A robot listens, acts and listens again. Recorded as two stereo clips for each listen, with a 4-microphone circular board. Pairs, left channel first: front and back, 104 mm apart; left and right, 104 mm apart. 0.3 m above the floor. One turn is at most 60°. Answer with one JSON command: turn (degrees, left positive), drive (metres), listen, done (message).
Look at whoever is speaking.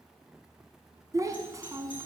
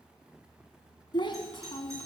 {"turn": 60}
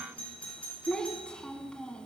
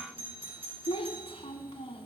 {"turn": 60}
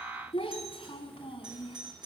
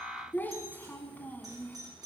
{"turn": 20}
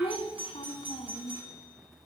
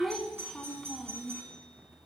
{"done": "Found it: a child speaking, straight ahead, 1 to 2 m away."}